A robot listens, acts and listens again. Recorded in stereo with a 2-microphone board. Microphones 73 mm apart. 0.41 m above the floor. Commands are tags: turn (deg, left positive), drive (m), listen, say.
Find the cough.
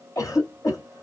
<turn deg="45"/>
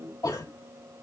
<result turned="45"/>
<turn deg="75"/>
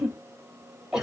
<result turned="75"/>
<turn deg="-10"/>
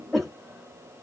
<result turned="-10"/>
<say>Found it: a cough, straight ahead, 2 to 4 m away.</say>